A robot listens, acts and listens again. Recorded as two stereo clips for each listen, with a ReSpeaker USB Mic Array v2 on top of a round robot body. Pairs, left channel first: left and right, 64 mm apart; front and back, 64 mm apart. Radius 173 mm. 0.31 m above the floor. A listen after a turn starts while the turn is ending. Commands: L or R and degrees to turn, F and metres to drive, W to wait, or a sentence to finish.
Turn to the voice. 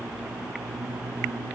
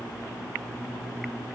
W
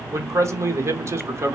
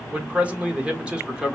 R110
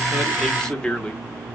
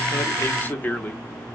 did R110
L30
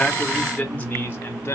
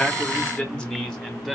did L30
L80
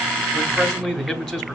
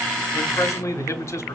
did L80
Found it: a man speaking, straight ahead.